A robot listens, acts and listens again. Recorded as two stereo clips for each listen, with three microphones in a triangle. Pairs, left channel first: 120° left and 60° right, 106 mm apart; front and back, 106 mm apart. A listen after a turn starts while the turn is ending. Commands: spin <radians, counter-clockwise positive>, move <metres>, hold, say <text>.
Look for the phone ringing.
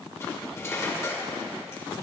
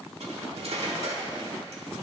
hold
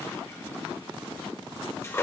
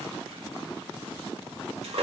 hold
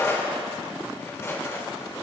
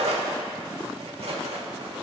say I can't make out a phone ringing to turn to.